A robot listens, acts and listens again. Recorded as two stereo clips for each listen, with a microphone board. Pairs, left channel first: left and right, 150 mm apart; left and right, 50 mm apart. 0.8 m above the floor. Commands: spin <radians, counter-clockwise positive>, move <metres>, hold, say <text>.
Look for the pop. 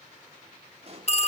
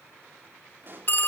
spin -0.79
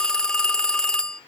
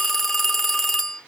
hold
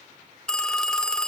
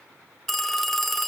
say I heard a pop, but can't make it out now. It was about straight ahead or 90° right.